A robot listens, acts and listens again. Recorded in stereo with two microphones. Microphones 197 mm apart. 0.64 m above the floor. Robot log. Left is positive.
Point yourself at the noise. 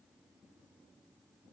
cmd idle
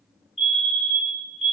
note: The fire alarm: about 35° left or 145° left.
cmd yaw +35
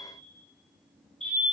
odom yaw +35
end: Facing the fire alarm.